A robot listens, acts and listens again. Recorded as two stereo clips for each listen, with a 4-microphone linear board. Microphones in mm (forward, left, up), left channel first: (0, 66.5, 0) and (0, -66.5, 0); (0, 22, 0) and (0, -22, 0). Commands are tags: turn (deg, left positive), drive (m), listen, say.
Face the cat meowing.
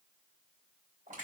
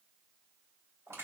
<listen/>
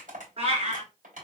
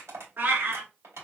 <turn deg="-55"/>
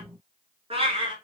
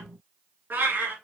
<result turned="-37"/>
<turn deg="-40"/>
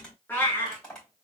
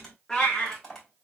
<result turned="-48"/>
<turn deg="20"/>
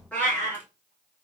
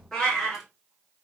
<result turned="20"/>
<turn deg="15"/>
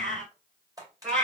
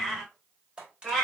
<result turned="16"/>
<say>Facing the cat meowing, 2 to 4 m away.</say>